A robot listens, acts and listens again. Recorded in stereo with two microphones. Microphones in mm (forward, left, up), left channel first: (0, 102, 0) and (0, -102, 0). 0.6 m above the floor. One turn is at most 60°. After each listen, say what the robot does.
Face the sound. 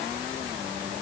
Keep listening.
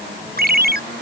Turn 50° right.
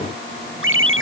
Turn 60° right.
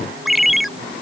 Facing the ringtone.